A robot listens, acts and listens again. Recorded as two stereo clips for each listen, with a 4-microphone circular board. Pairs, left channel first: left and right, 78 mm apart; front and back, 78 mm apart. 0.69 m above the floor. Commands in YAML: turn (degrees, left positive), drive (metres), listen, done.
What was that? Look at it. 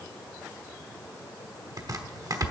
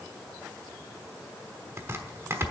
turn: -125
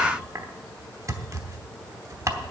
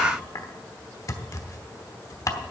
turn: -45
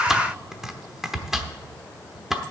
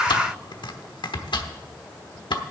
done: "Facing the chopping, 1 to 2 m away."